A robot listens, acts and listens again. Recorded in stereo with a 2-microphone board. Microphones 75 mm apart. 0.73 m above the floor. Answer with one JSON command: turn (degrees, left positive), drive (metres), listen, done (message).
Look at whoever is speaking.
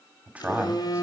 {"turn": -20}
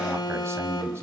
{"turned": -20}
{"turn": -140}
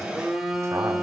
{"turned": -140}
{"turn": -45}
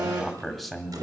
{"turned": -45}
{"done": "Found it: a man speaking, straight ahead, 1 to 2 m away."}